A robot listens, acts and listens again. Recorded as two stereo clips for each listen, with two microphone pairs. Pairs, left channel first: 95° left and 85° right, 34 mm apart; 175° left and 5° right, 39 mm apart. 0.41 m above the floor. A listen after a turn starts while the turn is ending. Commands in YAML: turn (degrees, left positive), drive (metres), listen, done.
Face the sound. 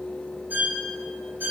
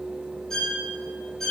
turn: -105
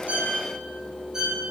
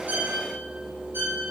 turn: -15
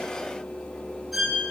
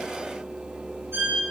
done: "Facing the violin, over 4 m away."